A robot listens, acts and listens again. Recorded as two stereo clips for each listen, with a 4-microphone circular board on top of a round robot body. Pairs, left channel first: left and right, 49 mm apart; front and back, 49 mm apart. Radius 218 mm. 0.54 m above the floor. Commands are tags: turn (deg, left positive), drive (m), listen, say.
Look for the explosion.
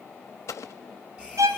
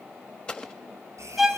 <turn deg="70"/>
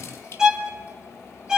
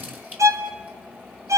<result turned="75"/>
<say>I heard an explosion from this way, but can't make it out now.</say>